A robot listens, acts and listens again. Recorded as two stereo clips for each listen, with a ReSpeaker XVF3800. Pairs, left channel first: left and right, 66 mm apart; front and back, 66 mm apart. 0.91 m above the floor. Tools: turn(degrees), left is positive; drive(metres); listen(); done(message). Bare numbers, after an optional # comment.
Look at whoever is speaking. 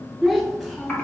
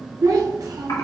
# The child speaking: 175° left.
turn(175)
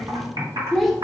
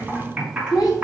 done("Found it: a child speaking, straight ahead, 1 to 2 m away.")